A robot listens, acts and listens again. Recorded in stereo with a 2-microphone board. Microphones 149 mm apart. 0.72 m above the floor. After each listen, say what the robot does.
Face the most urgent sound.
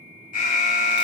Turn 70° left.
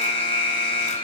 Turn 40° left.
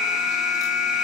Found it: an alarm, straight ahead, 2 to 4 m away.